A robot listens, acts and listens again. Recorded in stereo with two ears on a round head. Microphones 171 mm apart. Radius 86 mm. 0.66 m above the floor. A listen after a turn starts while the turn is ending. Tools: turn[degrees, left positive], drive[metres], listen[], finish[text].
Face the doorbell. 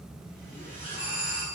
Action: turn[-30]
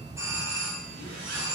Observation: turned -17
Thought: So it is at 160° right.
Action: turn[-160]
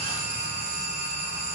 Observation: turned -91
Thought: The doorbell is now 65° right.
Action: turn[-65]
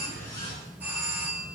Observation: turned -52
Thought: The doorbell is now 10° right.
Action: turn[-10]
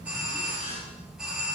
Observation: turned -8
Action: finish[Found it: a doorbell, straight ahead.]